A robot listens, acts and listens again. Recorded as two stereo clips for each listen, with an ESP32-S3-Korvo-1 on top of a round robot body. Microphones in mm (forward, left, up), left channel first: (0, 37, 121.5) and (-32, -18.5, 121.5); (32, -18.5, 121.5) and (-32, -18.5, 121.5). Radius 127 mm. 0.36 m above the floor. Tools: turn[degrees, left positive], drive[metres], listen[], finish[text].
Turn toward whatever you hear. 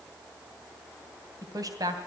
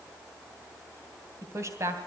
Thought: The woman speaking: 140° right.
Action: turn[-140]
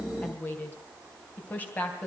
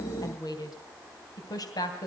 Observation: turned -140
Action: finish[Facing the woman speaking, 2 to 4 m away.]